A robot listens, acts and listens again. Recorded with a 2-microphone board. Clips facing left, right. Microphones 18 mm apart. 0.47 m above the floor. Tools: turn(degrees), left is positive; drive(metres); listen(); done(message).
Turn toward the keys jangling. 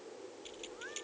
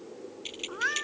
turn(degrees=-45)
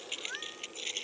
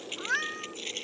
done("Found it: keys jangling, straight ahead.")